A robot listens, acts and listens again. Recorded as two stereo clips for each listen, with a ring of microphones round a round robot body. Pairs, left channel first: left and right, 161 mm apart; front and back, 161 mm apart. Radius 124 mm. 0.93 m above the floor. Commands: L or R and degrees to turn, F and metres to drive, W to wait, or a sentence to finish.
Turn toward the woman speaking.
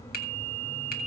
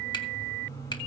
W
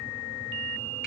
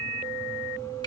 W
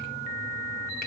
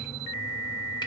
I can't make out a woman speaking.